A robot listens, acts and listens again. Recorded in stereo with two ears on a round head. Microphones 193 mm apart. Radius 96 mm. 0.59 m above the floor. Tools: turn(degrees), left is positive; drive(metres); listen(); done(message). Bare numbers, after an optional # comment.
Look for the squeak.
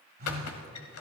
turn(90)
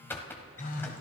# So it is at 10° left.
turn(10)
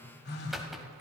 done("Found it: a squeak, straight ahead, 1 to 2 m away.")